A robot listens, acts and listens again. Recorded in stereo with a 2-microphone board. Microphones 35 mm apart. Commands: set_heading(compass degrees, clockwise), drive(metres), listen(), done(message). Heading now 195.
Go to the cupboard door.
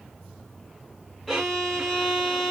listen()
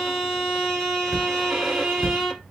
set_heading(165)
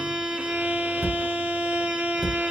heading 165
drive(1.0)
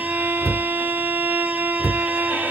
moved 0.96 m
drive(1.0)
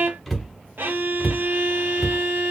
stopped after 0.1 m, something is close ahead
done("Arrived at the cupboard door, straight ahead.")